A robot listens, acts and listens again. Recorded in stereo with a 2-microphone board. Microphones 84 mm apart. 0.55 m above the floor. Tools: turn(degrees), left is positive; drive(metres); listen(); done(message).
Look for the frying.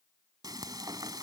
turn(degrees=-50)
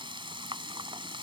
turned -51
turn(degrees=-75)
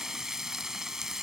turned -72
done("Found it: frying, straight ahead.")